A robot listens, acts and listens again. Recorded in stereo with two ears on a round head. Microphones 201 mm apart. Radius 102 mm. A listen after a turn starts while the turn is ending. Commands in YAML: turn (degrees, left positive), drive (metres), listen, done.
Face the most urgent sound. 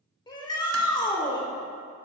turn: 20
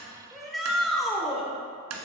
done: "Found it: a shout, straight ahead, 1 to 2 m away."